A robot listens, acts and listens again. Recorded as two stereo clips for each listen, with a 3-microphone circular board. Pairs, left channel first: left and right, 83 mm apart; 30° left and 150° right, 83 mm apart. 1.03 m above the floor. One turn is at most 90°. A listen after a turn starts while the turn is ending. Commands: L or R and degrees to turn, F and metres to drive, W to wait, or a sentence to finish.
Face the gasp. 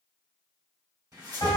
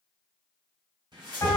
W
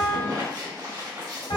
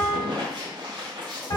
W
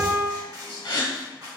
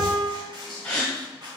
L90
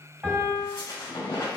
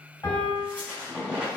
L10
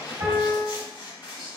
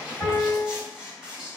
Facing where the gasp came from. I can't hear it now.